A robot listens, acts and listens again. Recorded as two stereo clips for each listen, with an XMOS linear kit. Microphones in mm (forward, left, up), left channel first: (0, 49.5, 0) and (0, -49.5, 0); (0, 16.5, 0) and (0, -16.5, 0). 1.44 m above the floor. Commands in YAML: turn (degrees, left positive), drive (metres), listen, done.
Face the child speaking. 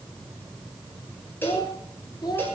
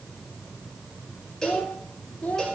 turn: 45
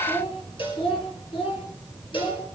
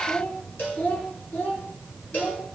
turn: 105
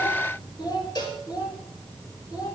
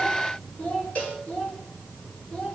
turn: 45
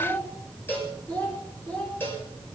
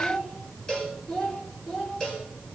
turn: 20
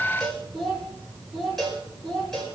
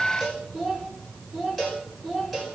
done: "Facing the child speaking, 2 to 4 m away."